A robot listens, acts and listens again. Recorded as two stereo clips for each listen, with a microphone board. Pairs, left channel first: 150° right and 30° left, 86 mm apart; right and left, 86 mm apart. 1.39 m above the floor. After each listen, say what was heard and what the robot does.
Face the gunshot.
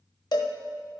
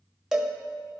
Keep listening.
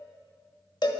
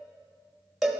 Keep listening.
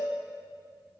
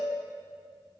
I can't make out a gunshot to turn to.